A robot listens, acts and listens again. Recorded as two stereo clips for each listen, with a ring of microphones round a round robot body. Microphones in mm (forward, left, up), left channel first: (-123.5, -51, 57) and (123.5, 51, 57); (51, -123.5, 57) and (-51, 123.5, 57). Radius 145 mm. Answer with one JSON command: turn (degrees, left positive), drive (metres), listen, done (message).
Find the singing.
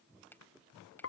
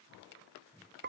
{"listen": true}
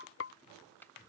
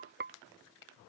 {"listen": true}
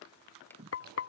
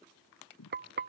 {"turn": -35}
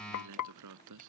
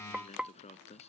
{"done": "Facing the singing."}